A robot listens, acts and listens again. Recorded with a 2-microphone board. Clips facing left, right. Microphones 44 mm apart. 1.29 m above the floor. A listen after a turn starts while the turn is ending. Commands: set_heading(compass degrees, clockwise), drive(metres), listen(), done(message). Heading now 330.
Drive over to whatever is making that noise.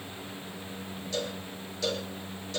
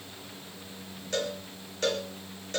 set_heading(20)
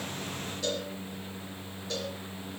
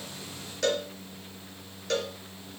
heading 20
set_heading(95)
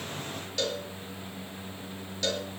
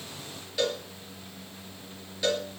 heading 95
set_heading(105)
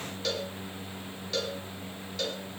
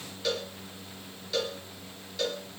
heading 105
drive(1.0)
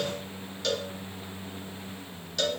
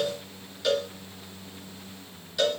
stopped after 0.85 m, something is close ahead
set_heading(115)
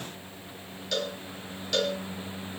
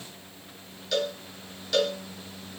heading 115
done("Something is in my way. I am facing the cowbell but have not reached it.")